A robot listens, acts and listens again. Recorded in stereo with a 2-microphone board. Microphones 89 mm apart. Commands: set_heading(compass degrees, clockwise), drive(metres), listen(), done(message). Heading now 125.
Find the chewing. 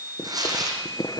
set_heading(75)
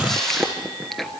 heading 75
done("Facing the chewing, 1 to 2 m away.")